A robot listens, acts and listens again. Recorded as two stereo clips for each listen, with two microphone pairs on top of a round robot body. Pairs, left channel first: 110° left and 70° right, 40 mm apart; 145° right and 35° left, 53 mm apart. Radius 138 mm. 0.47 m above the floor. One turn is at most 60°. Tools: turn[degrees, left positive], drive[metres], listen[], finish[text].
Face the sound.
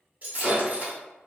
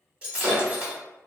Thought: The breaking glass: 30° right.
Action: turn[-30]
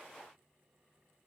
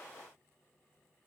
Action: finish[I heard breaking glass from this way, but can't make it out now.]